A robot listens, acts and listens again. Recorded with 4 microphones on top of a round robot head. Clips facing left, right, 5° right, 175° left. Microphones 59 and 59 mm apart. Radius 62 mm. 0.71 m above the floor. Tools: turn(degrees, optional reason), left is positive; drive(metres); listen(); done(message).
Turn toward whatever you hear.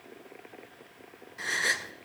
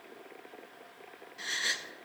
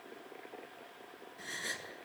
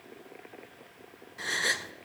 turn(degrees=150, reason="The gasp: 150° left.")
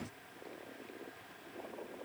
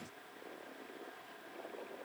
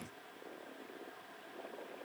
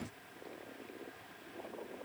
done("I heard a gasp from this way, but can't make it out now.")